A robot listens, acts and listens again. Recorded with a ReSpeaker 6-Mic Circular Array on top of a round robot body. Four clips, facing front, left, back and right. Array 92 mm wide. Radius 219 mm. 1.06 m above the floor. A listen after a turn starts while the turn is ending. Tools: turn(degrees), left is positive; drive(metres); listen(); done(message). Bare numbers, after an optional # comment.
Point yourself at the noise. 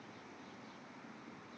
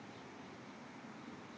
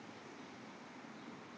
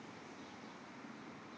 listen()
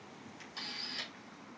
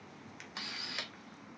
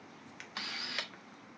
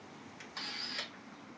# The camera shutter: 160° left.
turn(160)
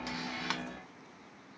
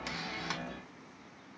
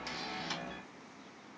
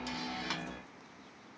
done("Found it: a camera shutter, straight ahead, 1 to 2 m away.")